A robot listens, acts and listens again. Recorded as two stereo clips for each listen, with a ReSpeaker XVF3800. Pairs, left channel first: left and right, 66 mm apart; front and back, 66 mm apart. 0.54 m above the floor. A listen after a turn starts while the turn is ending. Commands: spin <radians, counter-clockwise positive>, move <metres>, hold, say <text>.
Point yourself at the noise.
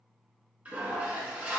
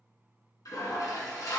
spin -0.35
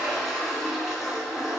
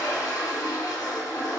say Found it: a toilet flushing, straight ahead, 1 to 2 m away.